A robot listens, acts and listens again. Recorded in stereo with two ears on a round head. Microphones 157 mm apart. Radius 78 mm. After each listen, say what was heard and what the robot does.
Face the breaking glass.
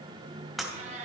Turn 30° left.
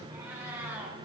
Keep listening.
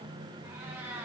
I heard breaking glass, but can't make it out now. It was about 30° right or 150° left.